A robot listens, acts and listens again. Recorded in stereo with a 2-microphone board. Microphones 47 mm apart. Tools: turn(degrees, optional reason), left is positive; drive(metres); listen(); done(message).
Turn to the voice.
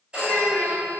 turn(degrees=45, reason="The child speaking: about 45° left or 135° left.")
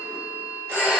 listen()
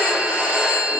listen()
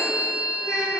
turn(degrees=90, reason="So it is at 90° left.")
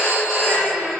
turn(degrees=-30, reason="The child speaking is now 30° right.")
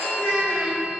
turn(degrees=15, reason="The child speaking is now 15° left.")
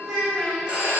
done("Found it: a child speaking, straight ahead, 1 to 2 m away.")